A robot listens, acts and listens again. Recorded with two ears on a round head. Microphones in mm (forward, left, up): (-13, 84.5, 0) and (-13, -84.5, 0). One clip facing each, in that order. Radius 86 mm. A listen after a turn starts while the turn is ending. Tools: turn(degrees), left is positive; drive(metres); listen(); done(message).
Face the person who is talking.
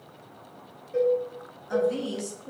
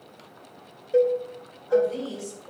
turn(degrees=60)
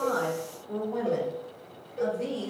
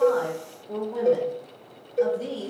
done("Found it: a woman speaking, straight ahead.")